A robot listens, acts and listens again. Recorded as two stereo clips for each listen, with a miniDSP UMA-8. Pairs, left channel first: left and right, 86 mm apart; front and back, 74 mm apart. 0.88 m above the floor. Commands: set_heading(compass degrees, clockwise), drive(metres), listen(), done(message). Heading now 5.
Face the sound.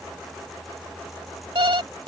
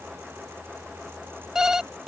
set_heading(105)
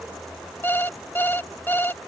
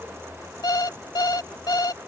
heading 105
set_heading(80)
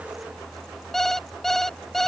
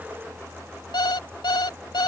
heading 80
done("Facing the alarm clock.")